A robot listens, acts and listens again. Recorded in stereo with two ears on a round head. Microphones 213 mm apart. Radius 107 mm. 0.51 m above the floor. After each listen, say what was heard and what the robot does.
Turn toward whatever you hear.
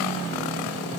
Keep listening.
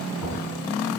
The knocking: about 75° left or 105° left. Turn 75° left.
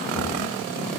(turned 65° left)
Keep listening.
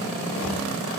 Keep listening.
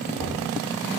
So it is at 15° left. Turn 15° left.
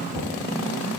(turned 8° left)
Facing the knocking, over 4 m away.